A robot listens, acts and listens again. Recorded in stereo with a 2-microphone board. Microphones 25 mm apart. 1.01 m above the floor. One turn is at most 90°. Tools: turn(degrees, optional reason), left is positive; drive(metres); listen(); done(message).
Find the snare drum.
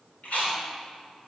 listen()
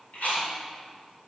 listen()
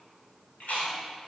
done("I can't make out a snare drum to turn to.")